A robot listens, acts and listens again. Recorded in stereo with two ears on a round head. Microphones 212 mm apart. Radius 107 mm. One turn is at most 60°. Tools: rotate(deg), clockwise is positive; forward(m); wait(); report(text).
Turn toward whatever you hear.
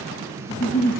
rotate(-55)
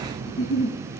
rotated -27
rotate(-60)
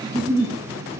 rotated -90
report("Facing the giggle.")